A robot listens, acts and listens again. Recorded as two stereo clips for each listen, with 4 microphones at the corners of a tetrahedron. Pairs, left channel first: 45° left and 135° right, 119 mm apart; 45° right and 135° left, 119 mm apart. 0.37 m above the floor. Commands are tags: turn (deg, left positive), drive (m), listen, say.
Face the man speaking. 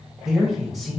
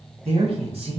<turn deg="135"/>
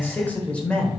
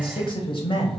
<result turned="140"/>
<turn deg="-40"/>
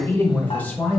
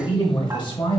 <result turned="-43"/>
<turn deg="-30"/>
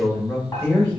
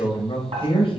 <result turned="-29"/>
<turn deg="-25"/>
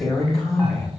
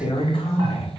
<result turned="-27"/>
<turn deg="-10"/>
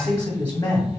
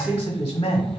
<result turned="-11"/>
<say>Facing the man speaking, 1 to 2 m away.</say>